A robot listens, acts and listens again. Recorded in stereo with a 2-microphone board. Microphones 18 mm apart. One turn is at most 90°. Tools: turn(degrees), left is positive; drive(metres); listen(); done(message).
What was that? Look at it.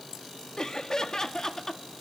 turn(degrees=30)
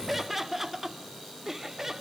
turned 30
turn(degrees=-20)
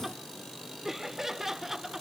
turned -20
turn(degrees=-15)
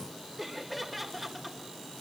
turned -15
done("Found it: laughter, straight ahead, over 4 m away.")